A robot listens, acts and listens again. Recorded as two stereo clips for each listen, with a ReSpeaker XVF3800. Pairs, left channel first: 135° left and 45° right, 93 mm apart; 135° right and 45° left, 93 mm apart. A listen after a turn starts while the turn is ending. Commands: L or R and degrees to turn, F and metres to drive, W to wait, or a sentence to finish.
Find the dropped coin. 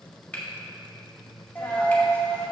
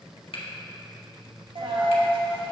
L60
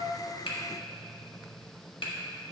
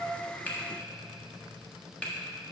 I heard a dropped coin from this way, but can't make it out now.